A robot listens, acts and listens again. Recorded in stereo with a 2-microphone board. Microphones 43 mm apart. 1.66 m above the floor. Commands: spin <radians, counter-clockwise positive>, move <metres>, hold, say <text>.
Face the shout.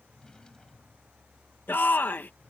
spin 0.87
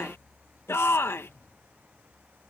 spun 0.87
spin 1.48
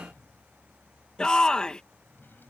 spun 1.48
spin 0.35
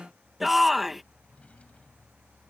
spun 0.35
say Found it: a shout, straight ahead.